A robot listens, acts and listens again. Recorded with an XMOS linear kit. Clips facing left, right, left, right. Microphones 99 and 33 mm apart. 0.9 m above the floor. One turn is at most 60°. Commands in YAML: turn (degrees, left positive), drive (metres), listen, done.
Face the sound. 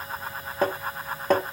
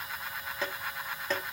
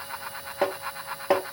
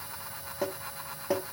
turn: 50
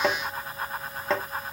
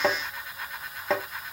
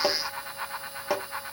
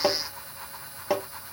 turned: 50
done: "Facing the tapping."